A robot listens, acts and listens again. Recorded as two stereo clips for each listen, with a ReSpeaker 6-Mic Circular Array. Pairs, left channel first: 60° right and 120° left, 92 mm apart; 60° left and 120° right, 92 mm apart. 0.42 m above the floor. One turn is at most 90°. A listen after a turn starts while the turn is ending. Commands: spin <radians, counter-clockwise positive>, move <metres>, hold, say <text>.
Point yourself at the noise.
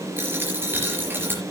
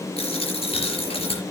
spin 0.87
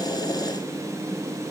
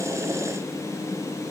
say Facing where the dropped coin came from. I can't hear it now.